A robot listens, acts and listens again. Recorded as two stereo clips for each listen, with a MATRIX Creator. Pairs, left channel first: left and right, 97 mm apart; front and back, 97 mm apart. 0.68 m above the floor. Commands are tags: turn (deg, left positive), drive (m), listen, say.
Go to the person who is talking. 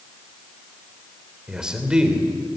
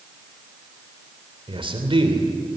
<turn deg="-170"/>
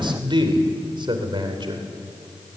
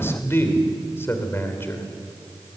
<turn deg="-60"/>
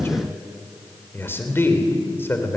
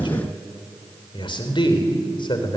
<turn deg="25"/>
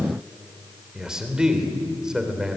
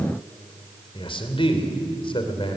<drive m="1.0"/>
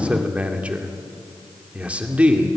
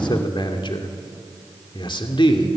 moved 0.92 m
<turn deg="-15"/>
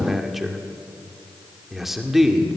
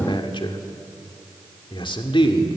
<drive m="1.0"/>
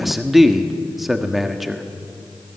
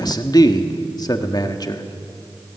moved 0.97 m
<drive m="1.0"/>
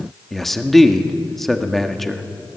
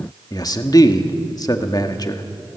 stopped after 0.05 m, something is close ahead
<say>I am next to the man speaking.</say>